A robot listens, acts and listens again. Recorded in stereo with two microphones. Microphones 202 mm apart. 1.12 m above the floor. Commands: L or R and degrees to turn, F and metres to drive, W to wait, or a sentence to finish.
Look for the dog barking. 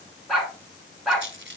L30
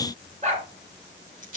R35
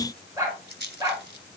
R20
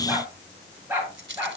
R10
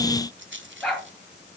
Facing the dog barking.